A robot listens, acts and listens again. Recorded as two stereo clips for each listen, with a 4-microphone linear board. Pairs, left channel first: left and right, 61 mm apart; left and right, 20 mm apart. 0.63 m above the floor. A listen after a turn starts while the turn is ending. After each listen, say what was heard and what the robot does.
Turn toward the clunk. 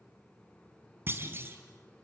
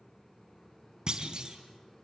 The clunk: about 35° right or 145° right. Turn 35° right.
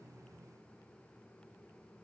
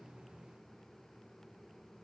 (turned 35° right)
Keep listening.
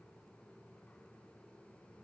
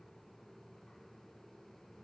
I heard a clunk, but can't make it out now. It was about straight ahead or 110° right.